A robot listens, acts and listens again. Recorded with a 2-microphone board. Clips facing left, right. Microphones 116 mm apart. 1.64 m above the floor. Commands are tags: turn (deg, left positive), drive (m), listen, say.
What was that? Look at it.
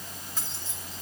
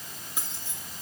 <turn deg="-30"/>
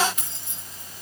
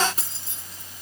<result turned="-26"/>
<turn deg="-145"/>
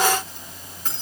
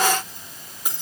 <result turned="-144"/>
<turn deg="-15"/>
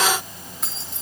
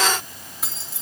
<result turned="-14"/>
<say>Found it: keys jangling, straight ahead, 2 to 4 m away.</say>